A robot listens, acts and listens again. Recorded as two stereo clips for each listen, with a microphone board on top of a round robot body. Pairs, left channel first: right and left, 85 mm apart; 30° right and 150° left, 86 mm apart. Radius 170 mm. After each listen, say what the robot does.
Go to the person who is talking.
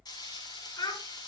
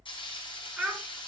Turn 130° right.
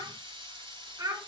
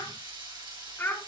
Turn 35° left.
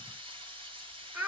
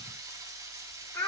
Turn 15° left.
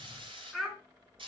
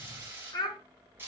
Drive 1.0 m forward.
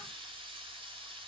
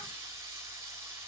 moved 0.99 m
Keep listening.
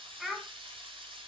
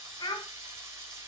Drive 1.0 m forward.
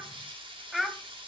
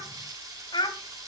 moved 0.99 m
Drive 1.0 m forward.
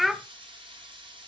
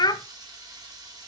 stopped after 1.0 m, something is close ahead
I am next to the child speaking.